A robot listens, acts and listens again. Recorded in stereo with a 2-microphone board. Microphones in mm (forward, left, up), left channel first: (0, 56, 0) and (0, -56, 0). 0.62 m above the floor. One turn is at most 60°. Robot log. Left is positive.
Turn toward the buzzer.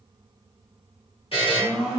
note: The buzzer: about 55° left or 125° left.
cmd yaw +55
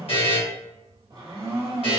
note: So it is at 65° left.
cmd yaw +60
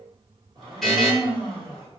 end: Facing the buzzer, 1 to 2 m away.